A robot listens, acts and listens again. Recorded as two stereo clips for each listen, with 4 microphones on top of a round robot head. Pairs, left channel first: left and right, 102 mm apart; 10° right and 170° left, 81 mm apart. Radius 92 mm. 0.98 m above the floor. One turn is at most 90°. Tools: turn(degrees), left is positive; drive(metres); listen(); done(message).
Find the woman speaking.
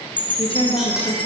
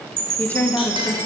turn(degrees=50)
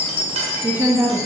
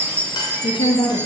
turn(degrees=-25)
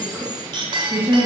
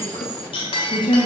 turn(degrees=-25)
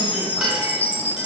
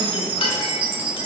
listen()
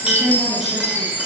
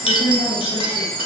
done("Facing the woman speaking, 2 to 4 m away.")